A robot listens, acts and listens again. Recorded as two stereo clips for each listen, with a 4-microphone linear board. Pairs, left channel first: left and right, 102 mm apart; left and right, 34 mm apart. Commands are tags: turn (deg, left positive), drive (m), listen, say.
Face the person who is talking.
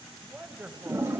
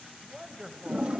<turn deg="-30"/>
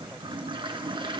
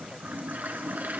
<listen/>
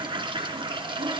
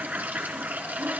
<listen/>
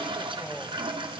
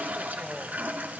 <say>I heard a man speaking, but can't make it out now. It was about 15° left or 135° right.</say>